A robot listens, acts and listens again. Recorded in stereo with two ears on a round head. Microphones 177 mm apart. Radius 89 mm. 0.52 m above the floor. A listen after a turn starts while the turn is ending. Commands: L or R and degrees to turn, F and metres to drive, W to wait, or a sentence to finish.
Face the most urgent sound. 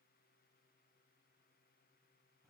W
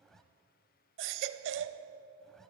R65
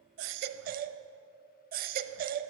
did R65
R50
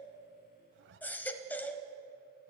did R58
L10
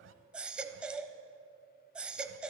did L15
Found it: a baby crying, straight ahead, under 1 m away.